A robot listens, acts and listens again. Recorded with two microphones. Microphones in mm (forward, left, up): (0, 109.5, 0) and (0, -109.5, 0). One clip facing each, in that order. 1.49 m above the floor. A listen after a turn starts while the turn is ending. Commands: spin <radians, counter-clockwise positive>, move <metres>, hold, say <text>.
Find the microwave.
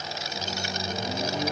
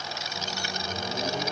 spin 1.57
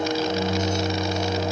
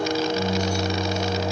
say Found it: a microwave, straight ahead, 2 to 4 m away.